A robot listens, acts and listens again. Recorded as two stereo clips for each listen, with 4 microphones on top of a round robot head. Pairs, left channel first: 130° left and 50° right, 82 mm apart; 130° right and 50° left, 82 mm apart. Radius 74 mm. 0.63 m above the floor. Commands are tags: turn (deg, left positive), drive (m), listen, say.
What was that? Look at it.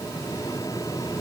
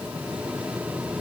<listen/>
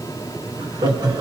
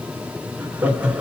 <turn deg="-25"/>
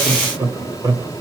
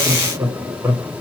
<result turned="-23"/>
<turn deg="-15"/>
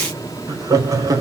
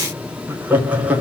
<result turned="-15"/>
<turn deg="-20"/>
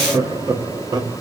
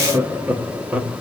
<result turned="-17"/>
<turn deg="-25"/>
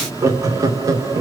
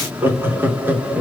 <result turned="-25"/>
<turn deg="-15"/>
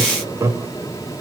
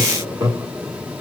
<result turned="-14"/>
<say>Found it: laughter, straight ahead, 1 to 2 m away.</say>